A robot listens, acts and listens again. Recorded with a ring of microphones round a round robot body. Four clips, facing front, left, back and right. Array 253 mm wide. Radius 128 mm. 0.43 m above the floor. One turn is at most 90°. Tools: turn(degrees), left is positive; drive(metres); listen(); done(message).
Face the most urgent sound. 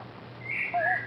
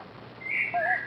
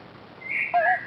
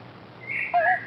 listen()
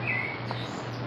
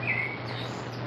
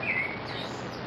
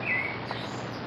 listen()
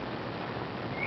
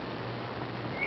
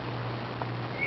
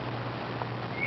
done("I can't make out anything urgent, only a bird.")